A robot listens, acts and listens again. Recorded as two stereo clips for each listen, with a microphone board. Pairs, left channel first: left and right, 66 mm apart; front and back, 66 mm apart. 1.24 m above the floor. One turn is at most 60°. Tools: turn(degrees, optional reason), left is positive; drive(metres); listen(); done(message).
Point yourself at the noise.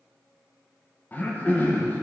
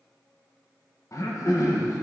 turn(degrees=30, reason="The throat clearing: 30° left.")
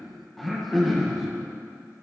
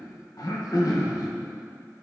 done("Found it: throat clearing, straight ahead.")